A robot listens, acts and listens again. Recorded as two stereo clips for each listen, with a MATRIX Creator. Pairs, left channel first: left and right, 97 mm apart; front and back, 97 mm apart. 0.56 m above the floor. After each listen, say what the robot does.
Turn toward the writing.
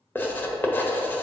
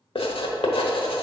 Turn 20° left.
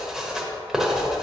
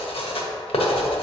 Found it: writing, straight ahead.